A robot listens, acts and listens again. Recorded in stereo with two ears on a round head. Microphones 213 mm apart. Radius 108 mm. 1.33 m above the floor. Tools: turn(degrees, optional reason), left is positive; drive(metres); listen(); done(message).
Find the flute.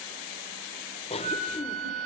turn(degrees=-90)
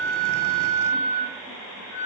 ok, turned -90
done("Found it: a flute, straight ahead.")